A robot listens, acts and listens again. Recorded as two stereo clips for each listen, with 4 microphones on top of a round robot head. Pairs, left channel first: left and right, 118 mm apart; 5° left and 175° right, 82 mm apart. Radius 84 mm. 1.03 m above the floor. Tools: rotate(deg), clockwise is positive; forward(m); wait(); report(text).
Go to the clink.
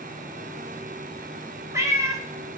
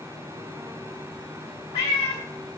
wait()
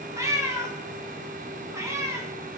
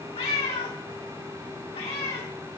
wait()
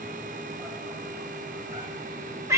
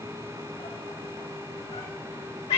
report("I can't make out a clink to turn to.")